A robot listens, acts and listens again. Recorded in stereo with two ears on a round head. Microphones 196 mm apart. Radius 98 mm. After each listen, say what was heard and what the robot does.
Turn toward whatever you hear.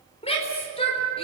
The shout: about 25° left or 155° left. Turn 25° left.
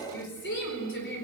So it is at 125° left. Turn 125° left.
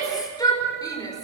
The shout is now 15° left. Turn 15° left.
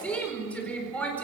Found it: a shout, straight ahead.